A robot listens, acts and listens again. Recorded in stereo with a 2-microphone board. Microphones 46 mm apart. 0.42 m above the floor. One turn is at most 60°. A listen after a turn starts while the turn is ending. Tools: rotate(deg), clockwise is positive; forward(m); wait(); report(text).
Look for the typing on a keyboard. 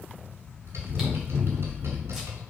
rotate(60)
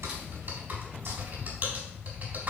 rotate(45)
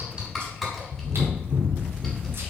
report("Facing the typing on a keyboard, 2 to 4 m away.")